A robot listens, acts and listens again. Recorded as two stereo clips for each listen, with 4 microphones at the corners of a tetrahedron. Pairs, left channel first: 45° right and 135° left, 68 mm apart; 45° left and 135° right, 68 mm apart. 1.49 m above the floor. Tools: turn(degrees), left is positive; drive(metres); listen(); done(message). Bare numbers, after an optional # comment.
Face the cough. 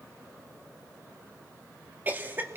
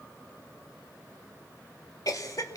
# The cough: 75° left.
turn(75)
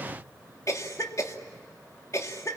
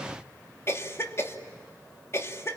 done("Found it: a cough, straight ahead, 2 to 4 m away.")